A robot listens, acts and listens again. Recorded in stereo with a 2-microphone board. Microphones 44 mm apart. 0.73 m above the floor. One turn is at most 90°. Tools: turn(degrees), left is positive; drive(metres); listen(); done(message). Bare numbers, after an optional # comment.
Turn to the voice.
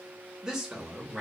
# The man speaking: about 15° right or 165° right.
turn(-15)
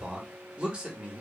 # So it is at 150° right.
turn(-90)
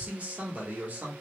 # The man speaking is now 45° right.
turn(-45)
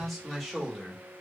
done("Found it: a man speaking, straight ahead.")